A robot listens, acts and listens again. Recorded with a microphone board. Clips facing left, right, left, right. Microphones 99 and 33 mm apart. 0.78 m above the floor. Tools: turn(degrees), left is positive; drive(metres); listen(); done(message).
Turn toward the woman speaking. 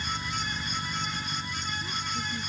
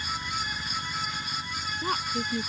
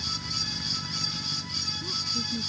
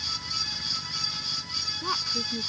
turn(degrees=-75)
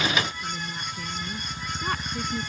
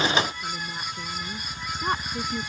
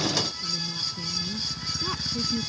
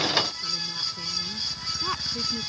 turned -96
turn(degrees=-20)
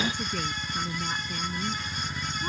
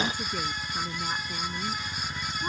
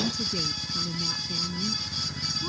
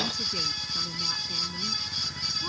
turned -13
turn(degrees=-10)
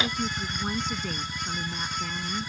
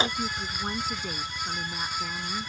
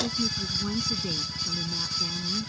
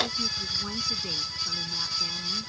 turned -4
done("Found it: a woman speaking, straight ahead.")